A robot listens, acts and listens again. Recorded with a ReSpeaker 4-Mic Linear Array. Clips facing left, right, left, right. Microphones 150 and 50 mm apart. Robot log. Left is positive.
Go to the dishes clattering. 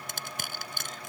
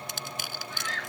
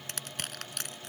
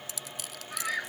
cmd idle
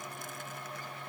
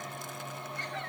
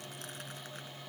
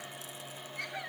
cmd idle
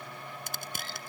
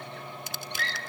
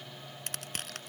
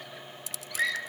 end: I can't make out dishes clattering, only crushing and a scream.